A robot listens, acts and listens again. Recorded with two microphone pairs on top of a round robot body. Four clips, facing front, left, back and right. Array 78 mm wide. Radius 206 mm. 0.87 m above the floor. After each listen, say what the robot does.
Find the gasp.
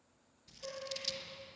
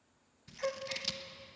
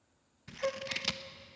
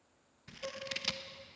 Turn 140° left.
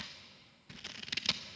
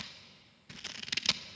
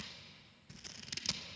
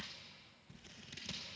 I heard a gasp from this way, but can't make it out now.